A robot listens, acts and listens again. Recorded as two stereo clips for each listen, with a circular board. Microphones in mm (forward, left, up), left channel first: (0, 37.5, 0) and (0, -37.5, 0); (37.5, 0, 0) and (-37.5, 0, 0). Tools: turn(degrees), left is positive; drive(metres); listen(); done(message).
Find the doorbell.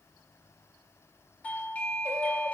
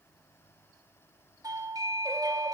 turn(degrees=160)
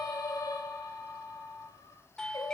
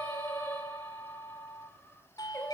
turn(degrees=10)
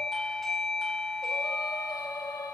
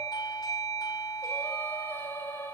done("Found it: a doorbell, straight ahead, 2 to 4 m away.")